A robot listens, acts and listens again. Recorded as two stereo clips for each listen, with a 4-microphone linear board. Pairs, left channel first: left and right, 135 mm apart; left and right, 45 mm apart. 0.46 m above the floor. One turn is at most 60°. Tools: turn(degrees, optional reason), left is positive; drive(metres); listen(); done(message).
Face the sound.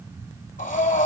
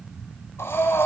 turn(degrees=60)
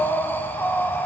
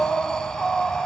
turn(degrees=15, reason="So it is at 15° left.")
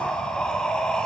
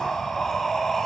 done("Facing the breathing.")